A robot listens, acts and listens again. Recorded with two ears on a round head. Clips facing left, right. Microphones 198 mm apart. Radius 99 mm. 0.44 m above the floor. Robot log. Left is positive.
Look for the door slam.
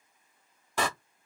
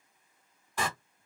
note: The door slam: about 60° left or 120° left.
cmd yaw +60
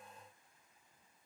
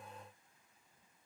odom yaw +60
cmd idle
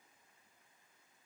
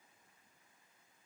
end: I heard a door slam, but can't make it out now. It was about straight ahead or 60° left.